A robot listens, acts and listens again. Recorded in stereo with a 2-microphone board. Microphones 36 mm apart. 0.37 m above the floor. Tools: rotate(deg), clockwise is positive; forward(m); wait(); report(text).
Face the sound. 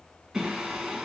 rotate(15)
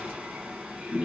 rotate(150)
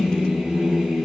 rotate(15)
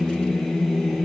report("Found it: singing, straight ahead, 1 to 2 m away.")